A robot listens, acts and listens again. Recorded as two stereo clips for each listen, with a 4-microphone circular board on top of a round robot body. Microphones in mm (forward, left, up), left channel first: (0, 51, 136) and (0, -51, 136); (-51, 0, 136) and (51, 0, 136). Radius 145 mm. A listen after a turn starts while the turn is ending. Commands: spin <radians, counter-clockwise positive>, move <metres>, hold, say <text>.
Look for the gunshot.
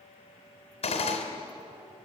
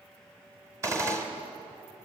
spin 1.05
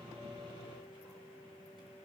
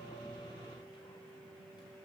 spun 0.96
say Facing where the gunshot came from. I can't hear it now.